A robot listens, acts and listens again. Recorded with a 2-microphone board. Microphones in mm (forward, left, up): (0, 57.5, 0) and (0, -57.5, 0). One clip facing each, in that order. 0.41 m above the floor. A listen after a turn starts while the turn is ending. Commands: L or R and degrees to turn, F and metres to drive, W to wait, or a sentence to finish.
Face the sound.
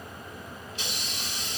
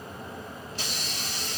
R40
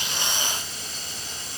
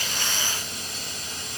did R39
R95
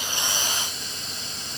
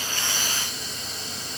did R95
Found it: a hiss, straight ahead.